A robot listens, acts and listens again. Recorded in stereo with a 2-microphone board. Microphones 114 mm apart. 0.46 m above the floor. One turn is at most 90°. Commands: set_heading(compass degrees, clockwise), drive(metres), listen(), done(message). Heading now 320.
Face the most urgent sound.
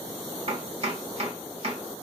listen()
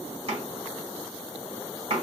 listen()
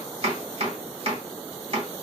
done("I can't make out anything urgent to turn to.")